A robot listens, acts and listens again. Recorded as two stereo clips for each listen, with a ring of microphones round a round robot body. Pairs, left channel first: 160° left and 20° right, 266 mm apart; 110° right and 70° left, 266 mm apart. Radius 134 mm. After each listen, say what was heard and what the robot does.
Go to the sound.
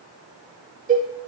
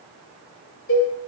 The cowbell: 80° right. Turn 80° right.
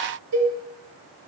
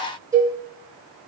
The cowbell is now 10° right. Turn 10° right.
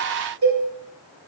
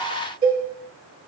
Drive 1.0 m forward.
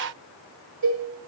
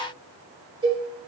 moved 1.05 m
Drive 1.0 m forward.
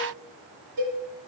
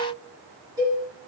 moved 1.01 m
The cowbell is now 10° right. Turn 10° right.
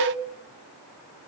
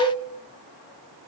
Drive 1.0 m forward.
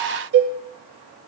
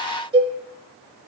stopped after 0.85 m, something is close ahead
Arrived at the cowbell, straight ahead.